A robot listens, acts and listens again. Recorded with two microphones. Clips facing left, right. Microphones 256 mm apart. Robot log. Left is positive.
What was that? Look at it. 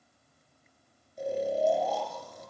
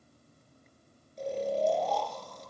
cmd yaw +30
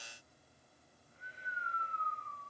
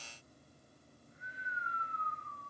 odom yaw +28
note: So it is at 145° left.
cmd yaw +145
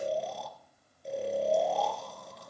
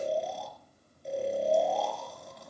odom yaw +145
end: Facing the snoring, 2 to 4 m away.